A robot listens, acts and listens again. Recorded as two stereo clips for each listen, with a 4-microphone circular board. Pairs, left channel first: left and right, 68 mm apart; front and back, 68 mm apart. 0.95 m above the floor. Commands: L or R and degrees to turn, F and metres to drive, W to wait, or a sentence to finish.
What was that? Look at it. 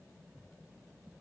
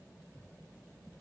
W
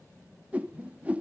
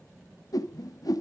R20
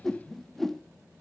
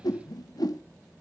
Found it: a whoosh, straight ahead.